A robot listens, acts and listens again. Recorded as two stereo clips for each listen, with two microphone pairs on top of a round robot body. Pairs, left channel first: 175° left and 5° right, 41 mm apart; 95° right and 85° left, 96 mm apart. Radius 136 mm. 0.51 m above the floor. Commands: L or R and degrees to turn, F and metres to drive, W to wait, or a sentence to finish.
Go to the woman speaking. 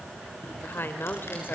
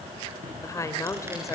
R150
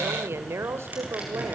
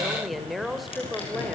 F1.0
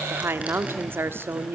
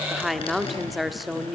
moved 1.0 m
F1.0
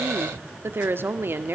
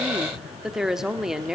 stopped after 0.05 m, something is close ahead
I am next to the woman speaking.